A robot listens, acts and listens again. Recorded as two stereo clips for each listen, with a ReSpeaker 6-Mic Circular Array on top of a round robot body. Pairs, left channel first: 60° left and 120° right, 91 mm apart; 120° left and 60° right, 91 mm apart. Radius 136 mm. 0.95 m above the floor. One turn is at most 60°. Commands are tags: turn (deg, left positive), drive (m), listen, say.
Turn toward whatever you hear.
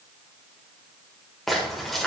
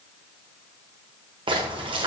<turn deg="-25"/>
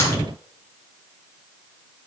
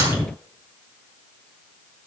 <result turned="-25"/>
<say>I heard a splash from this way, but can't make it out now.</say>